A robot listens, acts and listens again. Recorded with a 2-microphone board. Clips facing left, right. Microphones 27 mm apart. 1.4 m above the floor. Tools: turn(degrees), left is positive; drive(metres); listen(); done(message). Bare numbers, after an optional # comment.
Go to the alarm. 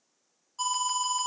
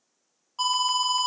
# The alarm: about 40° right or 140° right.
turn(-40)
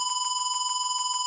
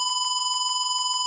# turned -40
drive(1.0)
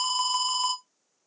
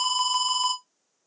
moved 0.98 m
# The alarm is now 10° right.
turn(-10)
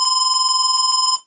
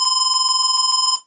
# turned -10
drive(1.0)
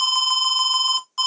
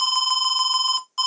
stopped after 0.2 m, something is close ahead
done("Arrived at the alarm, straight ahead.")